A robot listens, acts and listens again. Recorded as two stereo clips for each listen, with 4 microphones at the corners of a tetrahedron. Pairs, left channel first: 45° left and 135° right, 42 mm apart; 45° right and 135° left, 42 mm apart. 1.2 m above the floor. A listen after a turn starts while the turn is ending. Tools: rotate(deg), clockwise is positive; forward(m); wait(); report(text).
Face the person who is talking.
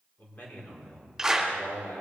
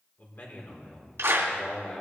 rotate(-10)
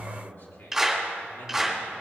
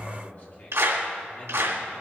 rotate(-10)
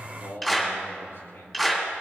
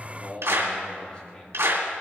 rotate(-25)
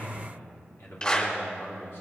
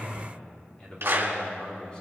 rotate(-25)
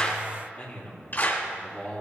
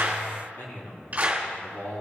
report("Found it: a man speaking, straight ahead, 2 to 4 m away.")